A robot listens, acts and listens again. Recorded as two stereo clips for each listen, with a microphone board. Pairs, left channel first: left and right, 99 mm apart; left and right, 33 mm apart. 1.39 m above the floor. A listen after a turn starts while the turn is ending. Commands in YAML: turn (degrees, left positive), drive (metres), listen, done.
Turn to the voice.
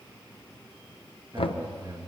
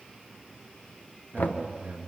turn: -45
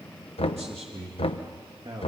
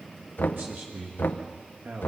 turn: -90
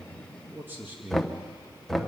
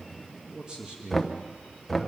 turn: -20
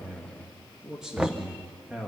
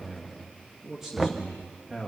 done: "Facing the man speaking, 2 to 4 m away."